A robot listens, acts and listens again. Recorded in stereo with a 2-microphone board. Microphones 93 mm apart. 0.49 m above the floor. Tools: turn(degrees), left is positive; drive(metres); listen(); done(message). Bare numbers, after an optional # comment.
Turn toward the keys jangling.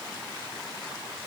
listen()
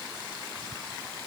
listen()
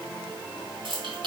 # The keys jangling: about 60° right or 120° right.
turn(-60)
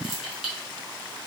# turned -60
done("Found it: keys jangling, straight ahead, 2 to 4 m away.")